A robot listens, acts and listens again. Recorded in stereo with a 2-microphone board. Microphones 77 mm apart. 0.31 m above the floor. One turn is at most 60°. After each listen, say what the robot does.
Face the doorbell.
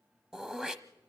Keep listening.
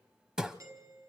Turn 45° right.
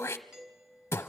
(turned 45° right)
Turn 10° right.
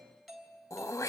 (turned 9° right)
Found it: a doorbell, straight ahead, 2 to 4 m away.